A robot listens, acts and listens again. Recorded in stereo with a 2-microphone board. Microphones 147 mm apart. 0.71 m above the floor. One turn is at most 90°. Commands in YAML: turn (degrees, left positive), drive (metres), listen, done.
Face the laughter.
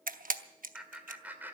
turn: -30
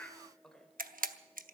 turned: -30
done: "Facing the laughter, 2 to 4 m away."